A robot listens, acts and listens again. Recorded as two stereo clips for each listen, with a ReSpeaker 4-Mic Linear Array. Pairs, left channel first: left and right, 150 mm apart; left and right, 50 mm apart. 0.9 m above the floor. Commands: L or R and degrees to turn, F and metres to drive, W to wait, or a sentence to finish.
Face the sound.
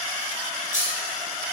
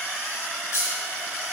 L60
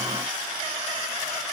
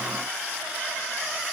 W
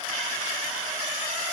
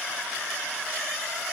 I heard a dropped coin, but can't make it out now. It was about straight ahead or 60° left.